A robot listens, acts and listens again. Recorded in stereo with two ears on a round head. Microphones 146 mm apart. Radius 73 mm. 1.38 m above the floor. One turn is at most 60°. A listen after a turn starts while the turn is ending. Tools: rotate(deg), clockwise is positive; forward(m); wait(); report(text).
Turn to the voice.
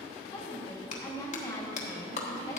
rotate(-20)
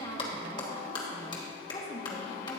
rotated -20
rotate(-60)
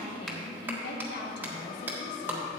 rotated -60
rotate(-60)
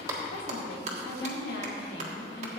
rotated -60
rotate(-60)
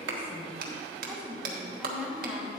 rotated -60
rotate(10)
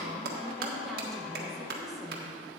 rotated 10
report("Facing the woman speaking.")